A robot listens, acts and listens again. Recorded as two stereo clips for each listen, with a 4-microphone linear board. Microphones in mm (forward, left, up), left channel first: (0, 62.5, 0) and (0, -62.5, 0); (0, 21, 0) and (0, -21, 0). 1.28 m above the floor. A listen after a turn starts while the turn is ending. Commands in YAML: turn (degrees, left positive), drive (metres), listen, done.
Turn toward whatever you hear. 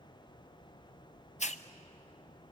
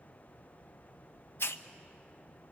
turn: 65
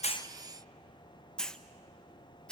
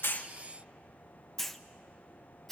done: "Facing the hiss, under 1 m away."